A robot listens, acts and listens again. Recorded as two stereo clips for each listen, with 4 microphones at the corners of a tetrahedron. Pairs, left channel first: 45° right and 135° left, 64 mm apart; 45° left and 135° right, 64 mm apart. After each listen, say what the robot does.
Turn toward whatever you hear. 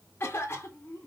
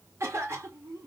Turn 100° right.
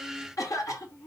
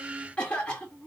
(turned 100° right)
Turn 30° right.
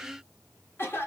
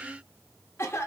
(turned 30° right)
Found it: a cough, straight ahead.